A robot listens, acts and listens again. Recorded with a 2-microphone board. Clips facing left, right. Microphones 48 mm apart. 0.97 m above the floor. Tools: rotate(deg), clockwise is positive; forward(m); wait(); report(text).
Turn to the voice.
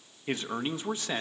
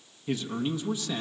rotate(-40)
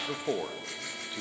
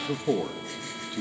rotate(-10)
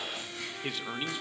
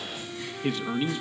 report("Found it: a man speaking, straight ahead.")